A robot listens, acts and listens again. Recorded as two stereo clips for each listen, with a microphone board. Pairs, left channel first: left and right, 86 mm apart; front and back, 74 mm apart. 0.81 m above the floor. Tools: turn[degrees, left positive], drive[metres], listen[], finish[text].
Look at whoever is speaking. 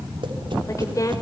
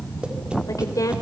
Thought: The woman speaking: 40° left.
Action: turn[40]
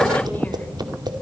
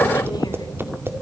Action: listen[]
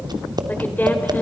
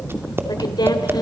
Thought: The woman speaking is now 20° left.
Action: turn[20]
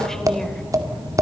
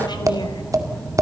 Action: listen[]
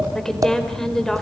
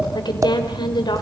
Action: finish[Found it: a woman speaking, straight ahead.]